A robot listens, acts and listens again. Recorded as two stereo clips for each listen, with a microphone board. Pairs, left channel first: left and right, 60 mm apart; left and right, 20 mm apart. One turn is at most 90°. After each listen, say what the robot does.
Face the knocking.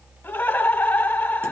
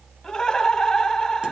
Keep listening.
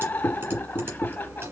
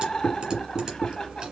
Turn 55° left.
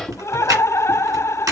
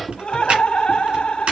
Found it: knocking, straight ahead, 2 to 4 m away.